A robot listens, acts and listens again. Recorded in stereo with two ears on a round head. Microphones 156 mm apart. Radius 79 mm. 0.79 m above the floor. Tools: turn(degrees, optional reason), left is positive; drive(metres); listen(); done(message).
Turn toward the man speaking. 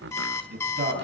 turn(degrees=-55, reason="The man speaking: about 55° right or 125° right.")
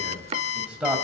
done("Facing the man speaking, 2 to 4 m away.")